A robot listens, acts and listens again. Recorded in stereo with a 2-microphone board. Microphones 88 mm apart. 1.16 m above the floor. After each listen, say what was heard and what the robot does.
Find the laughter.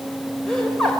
Turn 30° left.
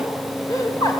So it is at 135° left. Turn 135° left.
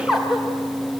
Facing the laughter, 2 to 4 m away.